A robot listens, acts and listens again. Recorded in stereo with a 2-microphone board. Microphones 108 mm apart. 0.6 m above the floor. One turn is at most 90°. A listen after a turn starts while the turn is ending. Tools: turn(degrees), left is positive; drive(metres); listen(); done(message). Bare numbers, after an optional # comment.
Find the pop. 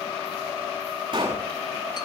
# The pop: about 45° right or 135° right.
turn(-45)
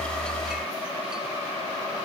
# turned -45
listen()
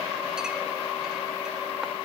done("I heard a pop, but can't make it out now. It was about straight ahead or 90° right.")